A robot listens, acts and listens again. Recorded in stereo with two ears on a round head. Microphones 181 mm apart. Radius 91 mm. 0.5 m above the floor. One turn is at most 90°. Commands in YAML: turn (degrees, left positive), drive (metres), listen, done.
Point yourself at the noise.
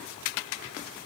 listen: true
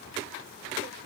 listen: true
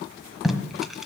turn: 30
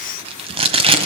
turn: -30
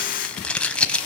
done: "Found it: tape being pulled, straight ahead, 1 to 2 m away."